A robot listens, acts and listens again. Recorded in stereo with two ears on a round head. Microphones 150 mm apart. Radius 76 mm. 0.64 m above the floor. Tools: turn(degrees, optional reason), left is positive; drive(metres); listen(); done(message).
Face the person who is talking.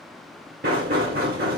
listen()
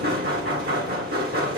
listen()
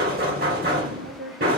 turn(degrees=-75, reason="The woman speaking: about 75° right or 105° right.")
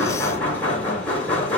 listen()
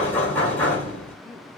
listen()
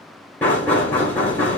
done("I heard a woman speaking, but can't make it out now. It was about straight ahead or 30° right.")